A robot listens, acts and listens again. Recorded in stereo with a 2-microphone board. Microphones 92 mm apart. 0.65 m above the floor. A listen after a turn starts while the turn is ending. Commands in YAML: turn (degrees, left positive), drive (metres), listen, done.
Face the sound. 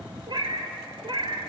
turn: -70
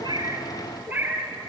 turn: -25
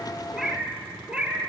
turn: -15
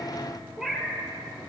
done: "Facing the cat meowing."